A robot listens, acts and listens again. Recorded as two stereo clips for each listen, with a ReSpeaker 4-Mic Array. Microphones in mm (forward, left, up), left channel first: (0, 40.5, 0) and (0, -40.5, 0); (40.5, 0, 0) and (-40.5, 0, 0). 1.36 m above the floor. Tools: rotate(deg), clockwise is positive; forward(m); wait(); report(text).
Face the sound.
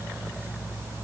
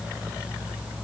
wait()
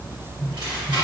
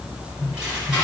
rotate(105)
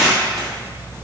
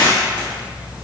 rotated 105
report("Facing the tearing paper.")